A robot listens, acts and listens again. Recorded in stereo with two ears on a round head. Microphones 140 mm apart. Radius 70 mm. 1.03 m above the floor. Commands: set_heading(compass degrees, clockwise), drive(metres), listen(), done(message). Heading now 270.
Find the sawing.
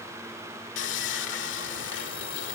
set_heading(180)
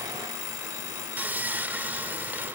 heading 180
set_heading(190)
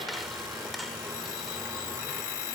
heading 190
done("Found it: sawing, straight ahead.")